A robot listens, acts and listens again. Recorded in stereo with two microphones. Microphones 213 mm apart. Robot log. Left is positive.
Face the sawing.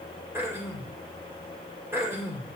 cmd idle
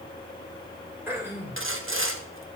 note: The sawing: about 70° right or 110° right.
cmd yaw -70
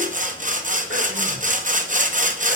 note: So it is at 35° right.
cmd yaw -35
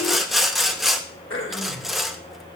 end: Facing the sawing.